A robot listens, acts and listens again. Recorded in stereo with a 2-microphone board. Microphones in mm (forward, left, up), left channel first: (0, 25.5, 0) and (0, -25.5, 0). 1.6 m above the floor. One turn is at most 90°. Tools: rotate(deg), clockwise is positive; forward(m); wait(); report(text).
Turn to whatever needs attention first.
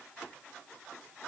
wait()
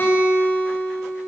wait()
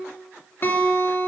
report("I can't make out anything urgent, only a guitar.")